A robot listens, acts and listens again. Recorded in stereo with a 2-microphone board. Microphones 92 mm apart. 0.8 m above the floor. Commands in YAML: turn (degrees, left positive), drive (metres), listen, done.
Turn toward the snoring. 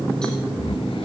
turn: 70
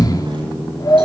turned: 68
turn: 45
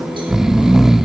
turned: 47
done: "Found it: snoring, straight ahead, under 1 m away."